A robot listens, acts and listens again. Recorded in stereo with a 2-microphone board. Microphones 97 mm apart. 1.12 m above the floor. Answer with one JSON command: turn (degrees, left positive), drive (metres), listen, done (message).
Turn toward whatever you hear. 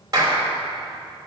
{"turn": -40}
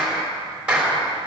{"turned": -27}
{"turn": -10}
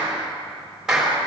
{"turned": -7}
{"done": "Found it: a clap, straight ahead, 2 to 4 m away."}